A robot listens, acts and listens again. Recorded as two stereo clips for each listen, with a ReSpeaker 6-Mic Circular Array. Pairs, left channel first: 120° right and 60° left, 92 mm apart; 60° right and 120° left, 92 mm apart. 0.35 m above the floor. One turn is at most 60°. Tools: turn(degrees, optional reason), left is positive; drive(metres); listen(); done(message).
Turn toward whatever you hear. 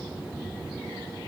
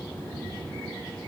listen()
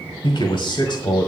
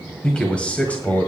turn(degrees=-60, reason="The man speaking: 125° right.")
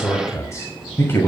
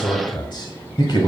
turn(degrees=-60, reason="The man speaking is now 60° right.")
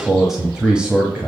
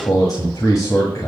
turn(degrees=-15, reason="The man speaking is now 15° right.")
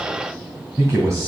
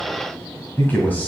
turn(degrees=10, reason="The man speaking is now 10° left.")
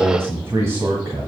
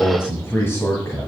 done("Found it: a man speaking, straight ahead.")